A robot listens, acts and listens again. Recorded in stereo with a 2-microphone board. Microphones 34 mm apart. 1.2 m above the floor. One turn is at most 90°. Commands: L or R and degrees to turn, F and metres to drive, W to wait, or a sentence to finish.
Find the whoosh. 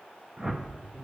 R20
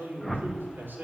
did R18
Found it: a whoosh, straight ahead, 1 to 2 m away.